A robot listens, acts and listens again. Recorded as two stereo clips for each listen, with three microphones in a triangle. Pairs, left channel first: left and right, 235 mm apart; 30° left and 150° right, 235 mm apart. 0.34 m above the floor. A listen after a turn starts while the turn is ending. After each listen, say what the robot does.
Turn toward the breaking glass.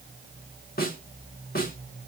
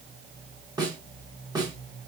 Keep listening.
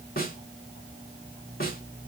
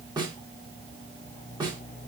Keep listening.
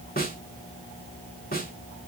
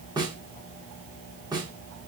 I can't make out breaking glass to turn to.